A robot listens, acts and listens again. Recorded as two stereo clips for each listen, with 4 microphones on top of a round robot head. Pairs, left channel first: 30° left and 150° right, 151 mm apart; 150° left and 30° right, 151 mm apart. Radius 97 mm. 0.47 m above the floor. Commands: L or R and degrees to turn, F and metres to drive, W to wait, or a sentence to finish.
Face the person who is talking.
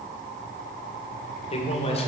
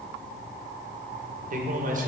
R10
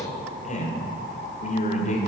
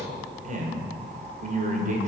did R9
Facing the man speaking, 1 to 2 m away.